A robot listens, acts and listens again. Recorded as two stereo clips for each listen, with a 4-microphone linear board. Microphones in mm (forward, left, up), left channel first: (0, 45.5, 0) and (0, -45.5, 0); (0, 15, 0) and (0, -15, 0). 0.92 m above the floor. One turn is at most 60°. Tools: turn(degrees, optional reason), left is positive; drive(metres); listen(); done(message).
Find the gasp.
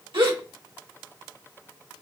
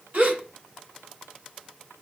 turn(degrees=-60, reason="The gasp: about 75° right or 105° right.")
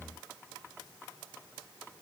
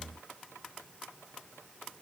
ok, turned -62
listen()
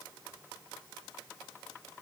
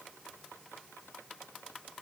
done("I heard a gasp, but can't make it out now. It was about 10° right or 45° right.")